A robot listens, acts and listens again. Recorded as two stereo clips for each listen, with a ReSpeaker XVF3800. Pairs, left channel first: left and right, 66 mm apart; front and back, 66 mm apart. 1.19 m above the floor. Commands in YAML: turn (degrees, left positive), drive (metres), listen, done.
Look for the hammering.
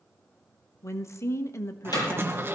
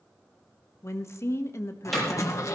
turn: 85
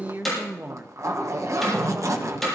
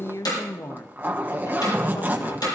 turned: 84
done: "Facing the hammering."